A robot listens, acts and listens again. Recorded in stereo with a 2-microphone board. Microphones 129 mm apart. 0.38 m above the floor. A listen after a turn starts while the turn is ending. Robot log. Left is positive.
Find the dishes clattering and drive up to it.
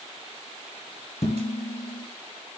note: The dishes clattering: about 75° left or 105° left.
cmd yaw +75
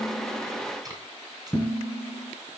note: So it is at 20° left.
cmd yaw +20
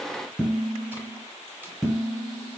cmd fwd 1.0
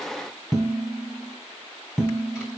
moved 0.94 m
cmd fwd 1.0
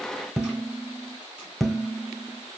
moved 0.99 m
cmd fwd 1.0
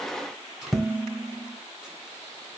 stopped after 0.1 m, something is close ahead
end: Arrived at the dishes clattering, straight ahead.